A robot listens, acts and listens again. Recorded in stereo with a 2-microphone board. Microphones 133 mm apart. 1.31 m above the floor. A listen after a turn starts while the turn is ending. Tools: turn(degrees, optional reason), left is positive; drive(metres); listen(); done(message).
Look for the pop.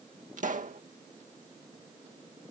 turn(degrees=-70, reason="The pop: about 70° right or 110° right.")
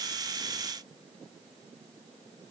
listen()
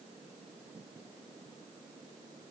done("I heard a pop, but can't make it out now. It was about straight ahead or 40° right.")